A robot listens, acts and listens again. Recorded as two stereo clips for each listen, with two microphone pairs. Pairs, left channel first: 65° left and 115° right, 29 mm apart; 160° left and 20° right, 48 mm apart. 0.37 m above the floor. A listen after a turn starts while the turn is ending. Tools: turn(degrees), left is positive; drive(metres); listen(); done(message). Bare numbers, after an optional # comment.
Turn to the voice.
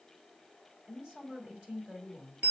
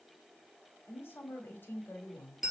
# The woman speaking: 160° right.
turn(-160)
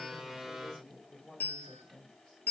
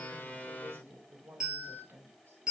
done("Found it: a woman speaking, straight ahead, 1 to 2 m away.")